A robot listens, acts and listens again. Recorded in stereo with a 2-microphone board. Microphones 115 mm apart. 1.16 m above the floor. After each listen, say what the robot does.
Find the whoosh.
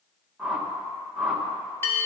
Turn 30° right.
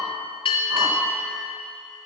Keep listening.
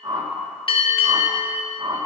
Turn 140° right.
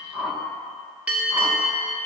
Facing the whoosh, 1 to 2 m away.